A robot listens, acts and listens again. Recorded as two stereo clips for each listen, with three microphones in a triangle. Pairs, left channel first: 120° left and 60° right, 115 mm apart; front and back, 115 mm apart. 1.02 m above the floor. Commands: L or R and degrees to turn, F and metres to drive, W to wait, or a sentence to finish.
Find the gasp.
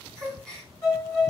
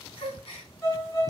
L35
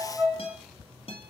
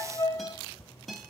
I heard a gasp from this way, but can't make it out now.